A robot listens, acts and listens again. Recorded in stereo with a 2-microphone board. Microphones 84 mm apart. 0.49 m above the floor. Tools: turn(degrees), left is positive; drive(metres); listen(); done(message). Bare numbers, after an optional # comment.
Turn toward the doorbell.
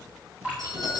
# The doorbell: about 60° right or 120° right.
turn(-60)
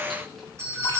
# So it is at 40° right.
turn(-40)
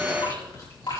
listen()
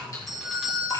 done("Found it: a doorbell, straight ahead, 2 to 4 m away.")